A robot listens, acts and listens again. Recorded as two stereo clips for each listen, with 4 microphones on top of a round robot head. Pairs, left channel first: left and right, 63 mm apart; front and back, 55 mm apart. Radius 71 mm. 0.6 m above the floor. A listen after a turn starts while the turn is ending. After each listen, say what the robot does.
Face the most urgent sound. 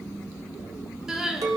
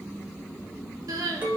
Turn 170° right.
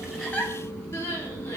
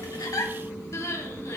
Turn 30° left.
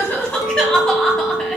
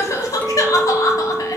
Turn 10° left.
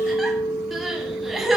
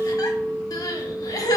Facing the crying, 1 to 2 m away.